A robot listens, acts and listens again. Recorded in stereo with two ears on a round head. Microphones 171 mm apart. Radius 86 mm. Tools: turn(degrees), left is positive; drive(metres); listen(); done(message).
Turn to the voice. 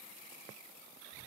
listen()
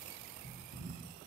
listen()
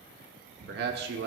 turn(degrees=-55)
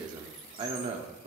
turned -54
turn(degrees=-35)
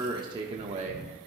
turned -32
turn(degrees=-35)
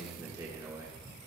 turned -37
turn(degrees=-15)
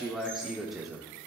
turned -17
done("Facing the man speaking.")